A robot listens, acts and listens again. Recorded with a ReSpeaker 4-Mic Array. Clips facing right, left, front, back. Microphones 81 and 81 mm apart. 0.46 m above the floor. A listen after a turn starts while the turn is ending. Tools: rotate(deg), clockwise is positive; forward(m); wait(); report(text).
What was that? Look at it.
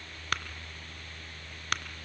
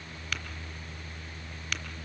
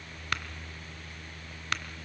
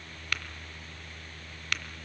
rotate(65)
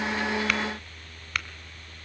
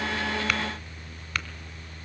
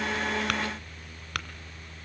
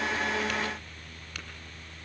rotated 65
rotate(10)
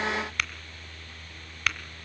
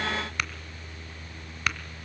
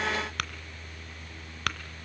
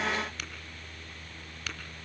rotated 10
report("Found it: tapping, straight ahead.")